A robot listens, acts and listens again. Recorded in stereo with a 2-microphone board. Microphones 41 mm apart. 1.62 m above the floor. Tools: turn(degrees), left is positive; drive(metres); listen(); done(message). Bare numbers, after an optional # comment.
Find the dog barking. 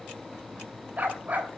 # The dog barking: about 40° right or 140° right.
turn(-40)
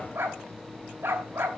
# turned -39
# So it is at 90° right.
turn(-90)
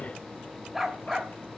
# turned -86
done("Found it: a dog barking, straight ahead.")